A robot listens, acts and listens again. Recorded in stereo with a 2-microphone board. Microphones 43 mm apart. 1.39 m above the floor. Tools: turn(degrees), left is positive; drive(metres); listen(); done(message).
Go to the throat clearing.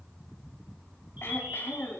turn(degrees=90)
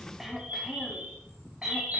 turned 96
turn(degrees=-10)
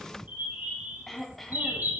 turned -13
drive(metres=1.0)
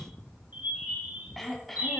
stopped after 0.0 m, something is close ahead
done("Blocked. The throat clearing is further on, straight ahead.")